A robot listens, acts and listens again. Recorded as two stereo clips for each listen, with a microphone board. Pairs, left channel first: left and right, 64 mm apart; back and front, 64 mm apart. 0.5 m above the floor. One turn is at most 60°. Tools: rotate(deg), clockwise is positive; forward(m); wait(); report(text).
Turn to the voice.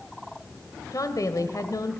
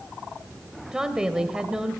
rotate(-60)
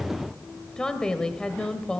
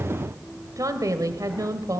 rotate(-15)
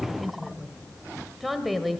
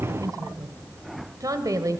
report("Found it: a woman speaking, straight ahead.")